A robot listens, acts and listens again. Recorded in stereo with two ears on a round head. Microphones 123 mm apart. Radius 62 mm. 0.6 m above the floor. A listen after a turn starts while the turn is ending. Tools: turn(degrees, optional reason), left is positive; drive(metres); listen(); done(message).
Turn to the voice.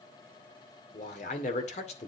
turn(degrees=50, reason="The man speaking: about 50° left or 130° left.")
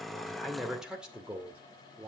turn(degrees=-15, reason="So it is at 15° right.")
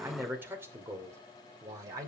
turn(degrees=-25, reason="The man speaking is now 25° right.")
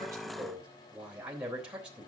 done("Found it: a man speaking, straight ahead.")